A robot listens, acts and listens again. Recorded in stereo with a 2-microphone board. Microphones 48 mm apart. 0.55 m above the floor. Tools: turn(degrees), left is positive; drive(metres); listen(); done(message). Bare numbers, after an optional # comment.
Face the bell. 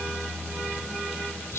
listen()
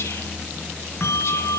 # The bell: about 65° left or 115° left.
turn(65)
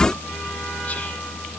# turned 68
listen()
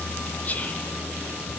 listen()
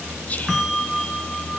done("Facing the bell, over 4 m away.")